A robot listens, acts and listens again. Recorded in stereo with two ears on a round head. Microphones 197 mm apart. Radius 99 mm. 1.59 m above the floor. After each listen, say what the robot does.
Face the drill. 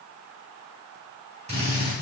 Turn 30° right.
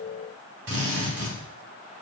Turn 120° right.
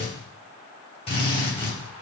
Turn 25° left.
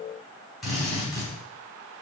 Facing the drill.